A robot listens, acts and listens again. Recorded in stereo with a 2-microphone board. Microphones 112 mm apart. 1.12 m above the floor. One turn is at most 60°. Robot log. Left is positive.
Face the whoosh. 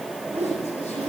note: The whoosh: about 70° right or 110° right.
cmd yaw -60
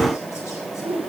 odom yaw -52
note: So it is at 60° right.
cmd yaw -60
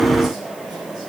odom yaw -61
cmd idle
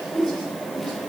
end: Found it: a whoosh, straight ahead, 2 to 4 m away.